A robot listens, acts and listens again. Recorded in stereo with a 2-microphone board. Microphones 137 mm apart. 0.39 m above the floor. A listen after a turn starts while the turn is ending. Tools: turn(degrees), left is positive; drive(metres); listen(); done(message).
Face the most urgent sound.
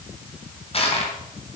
listen()
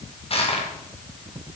listen()
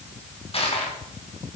done("I can't make out anything urgent, only crushing.")